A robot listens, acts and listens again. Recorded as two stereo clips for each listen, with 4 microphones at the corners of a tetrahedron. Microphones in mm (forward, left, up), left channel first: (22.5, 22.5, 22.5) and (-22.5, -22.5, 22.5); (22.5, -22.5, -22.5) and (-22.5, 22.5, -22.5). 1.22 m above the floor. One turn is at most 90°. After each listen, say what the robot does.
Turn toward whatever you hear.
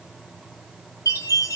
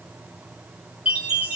Turn 65° left.
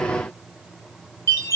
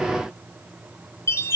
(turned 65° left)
Found it: a chime, straight ahead.